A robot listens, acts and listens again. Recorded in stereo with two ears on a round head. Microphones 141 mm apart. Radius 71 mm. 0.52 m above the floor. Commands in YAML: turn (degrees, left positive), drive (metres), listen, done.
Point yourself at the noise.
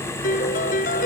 turn: 55
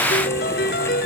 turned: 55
turn: 65
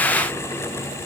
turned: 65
listen: true
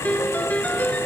turn: 10
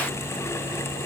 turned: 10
listen: true
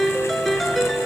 done: "Found it: a piano, straight ahead."